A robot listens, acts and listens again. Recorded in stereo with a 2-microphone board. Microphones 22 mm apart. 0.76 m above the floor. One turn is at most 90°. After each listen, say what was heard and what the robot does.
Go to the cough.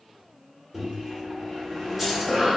The cough: about 40° right or 140° right. Turn 40° right.
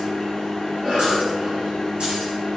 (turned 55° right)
So it is at 80° right. Turn 80° right.
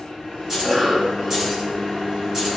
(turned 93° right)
The cough is now 15° left. Turn 15° left.
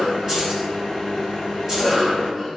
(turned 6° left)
Drive 1.0 m forward.
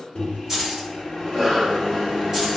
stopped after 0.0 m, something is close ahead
The cough is now 10° left. Turn 10° left.
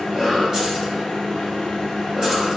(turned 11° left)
Blocked. The cough is further on, straight ahead.